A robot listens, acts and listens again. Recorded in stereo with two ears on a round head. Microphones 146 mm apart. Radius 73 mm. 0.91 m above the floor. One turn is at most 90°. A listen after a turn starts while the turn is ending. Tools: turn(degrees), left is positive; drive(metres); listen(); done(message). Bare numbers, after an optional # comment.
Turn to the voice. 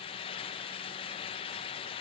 listen()
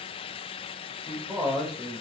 turn(30)
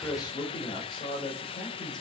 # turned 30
# So it is at 150° left.
turn(90)
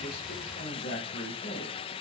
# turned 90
# The man speaking is now 65° left.
turn(65)
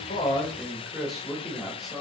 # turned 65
done("Facing the man speaking.")